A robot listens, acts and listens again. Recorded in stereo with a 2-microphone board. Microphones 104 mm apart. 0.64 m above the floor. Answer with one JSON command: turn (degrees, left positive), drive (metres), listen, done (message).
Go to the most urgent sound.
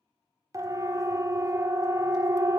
{"turn": -30}
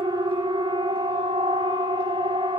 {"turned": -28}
{"turn": -110}
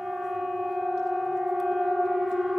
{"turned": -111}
{"drive": 1.0}
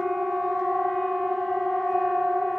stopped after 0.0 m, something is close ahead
{"done": "Something is in my way. I am facing the siren but have not reached it."}